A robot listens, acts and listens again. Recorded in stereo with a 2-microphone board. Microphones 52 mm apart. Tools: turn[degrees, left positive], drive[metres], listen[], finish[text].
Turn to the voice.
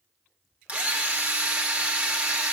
Action: listen[]
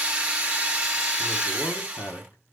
Thought: The man speaking: about 75° left or 105° left.
Action: turn[75]
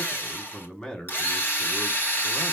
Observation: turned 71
Thought: So it is at 15° left.
Action: turn[15]
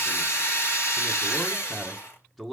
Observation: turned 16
Action: finish[Facing the man speaking.]